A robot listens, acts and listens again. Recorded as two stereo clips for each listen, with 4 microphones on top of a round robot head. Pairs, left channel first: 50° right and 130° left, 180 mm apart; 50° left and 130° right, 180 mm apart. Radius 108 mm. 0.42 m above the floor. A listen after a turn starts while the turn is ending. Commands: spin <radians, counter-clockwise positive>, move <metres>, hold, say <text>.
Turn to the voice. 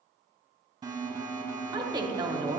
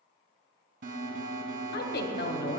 spin 1.13
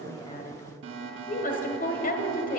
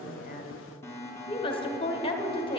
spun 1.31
spin -0.17
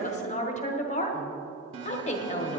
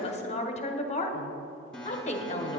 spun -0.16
say Facing the woman speaking, 1 to 2 m away.